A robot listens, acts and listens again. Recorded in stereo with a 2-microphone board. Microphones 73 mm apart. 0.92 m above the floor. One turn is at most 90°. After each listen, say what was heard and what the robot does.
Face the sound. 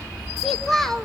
Turn 30° left.
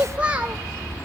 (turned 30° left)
So it is at 20° right. Turn 20° right.
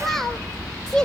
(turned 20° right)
The child speaking is now 10° left. Turn 10° left.
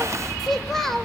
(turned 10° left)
Facing the child speaking, 2 to 4 m away.